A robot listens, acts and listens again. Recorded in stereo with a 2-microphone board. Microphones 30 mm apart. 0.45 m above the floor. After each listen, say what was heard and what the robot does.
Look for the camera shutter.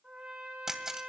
The camera shutter: about 20° right or 160° right. Turn 20° right.
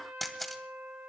Found it: a camera shutter, straight ahead.